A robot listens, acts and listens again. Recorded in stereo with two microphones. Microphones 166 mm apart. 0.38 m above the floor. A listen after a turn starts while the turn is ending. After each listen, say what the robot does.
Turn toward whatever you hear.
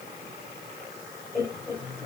Turn 15° left.
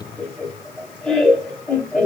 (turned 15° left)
Found it: laughter, straight ahead.